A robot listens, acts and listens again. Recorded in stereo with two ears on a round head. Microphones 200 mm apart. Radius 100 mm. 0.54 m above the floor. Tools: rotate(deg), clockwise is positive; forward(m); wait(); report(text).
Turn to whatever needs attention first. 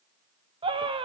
rotate(25)
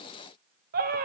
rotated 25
rotate(130)
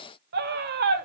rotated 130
rotate(55)
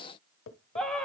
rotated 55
report("Facing the scream.")